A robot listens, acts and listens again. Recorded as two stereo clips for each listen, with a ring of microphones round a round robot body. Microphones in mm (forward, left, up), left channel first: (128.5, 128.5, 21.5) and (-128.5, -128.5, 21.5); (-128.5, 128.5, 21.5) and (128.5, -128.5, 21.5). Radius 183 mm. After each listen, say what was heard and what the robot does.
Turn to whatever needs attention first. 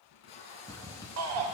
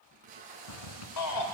The shout: 175° left. Turn 175° left.
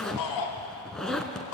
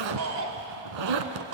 The shout is now 10° left. Turn 10° left.
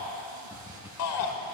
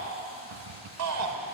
Facing the shout, over 4 m away.